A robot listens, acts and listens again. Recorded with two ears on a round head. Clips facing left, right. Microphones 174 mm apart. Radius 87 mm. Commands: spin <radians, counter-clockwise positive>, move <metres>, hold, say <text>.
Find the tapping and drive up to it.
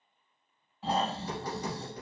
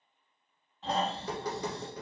spin -1.13
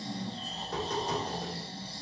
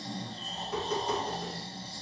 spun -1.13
spin -0.17
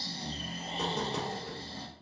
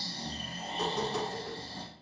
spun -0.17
move 1.0
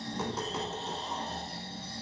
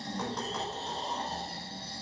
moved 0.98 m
hold
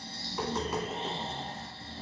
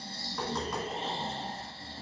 move 1.0
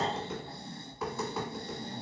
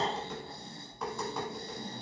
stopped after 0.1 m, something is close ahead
say Arrived at the tapping, straight ahead.